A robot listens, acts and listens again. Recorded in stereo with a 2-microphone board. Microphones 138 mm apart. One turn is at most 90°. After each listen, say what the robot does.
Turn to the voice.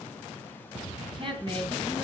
Turn 40° right.
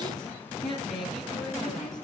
Found it: a woman speaking, straight ahead.